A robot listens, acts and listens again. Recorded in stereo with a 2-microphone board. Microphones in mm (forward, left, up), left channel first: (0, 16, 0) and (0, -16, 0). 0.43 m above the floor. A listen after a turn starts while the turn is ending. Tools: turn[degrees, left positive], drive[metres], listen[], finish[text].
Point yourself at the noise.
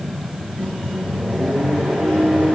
Thought: The microwave: about 30° left or 150° left.
Action: turn[30]
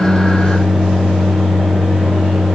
Thought: So it is at 110° left.
Action: turn[110]
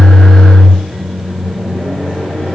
Thought: The microwave is now 35° left.
Action: turn[35]
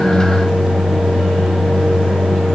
Action: finish[Found it: a microwave, straight ahead, 2 to 4 m away.]